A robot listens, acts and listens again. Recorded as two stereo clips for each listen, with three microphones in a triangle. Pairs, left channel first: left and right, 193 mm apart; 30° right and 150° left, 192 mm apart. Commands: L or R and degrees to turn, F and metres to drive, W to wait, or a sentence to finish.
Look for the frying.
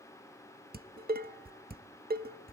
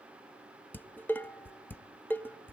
W
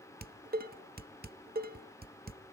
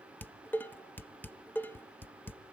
W
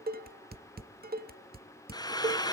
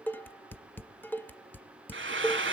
L160
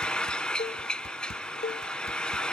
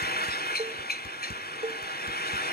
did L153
Found it: frying, straight ahead.